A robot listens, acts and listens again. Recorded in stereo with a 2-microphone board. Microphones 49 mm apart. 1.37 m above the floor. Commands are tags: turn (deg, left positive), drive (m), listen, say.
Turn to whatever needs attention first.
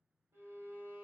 <listen/>
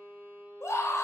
<turn deg="75"/>
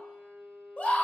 <turn deg="30"/>
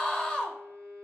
<turn deg="15"/>
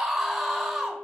<say>Found it: a scream, straight ahead, under 1 m away.</say>